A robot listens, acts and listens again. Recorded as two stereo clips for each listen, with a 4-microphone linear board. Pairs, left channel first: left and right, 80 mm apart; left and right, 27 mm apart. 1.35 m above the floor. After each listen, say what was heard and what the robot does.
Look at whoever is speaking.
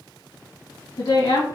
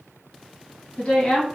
The woman speaking: about 65° left or 115° left. Turn 65° left.
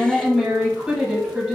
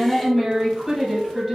Found it: a woman speaking, straight ahead, 1 to 2 m away.